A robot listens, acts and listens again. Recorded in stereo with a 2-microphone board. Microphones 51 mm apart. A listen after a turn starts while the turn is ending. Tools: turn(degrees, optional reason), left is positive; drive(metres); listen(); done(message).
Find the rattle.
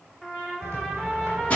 turn(degrees=-90)
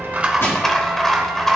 done("Facing the rattle.")